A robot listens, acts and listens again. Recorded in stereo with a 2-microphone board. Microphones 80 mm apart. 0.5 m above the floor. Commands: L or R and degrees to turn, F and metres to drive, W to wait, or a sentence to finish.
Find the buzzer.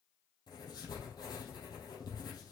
W
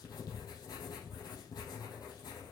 W
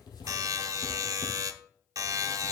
R45
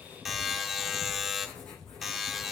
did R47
Found it: a buzzer, straight ahead, under 1 m away.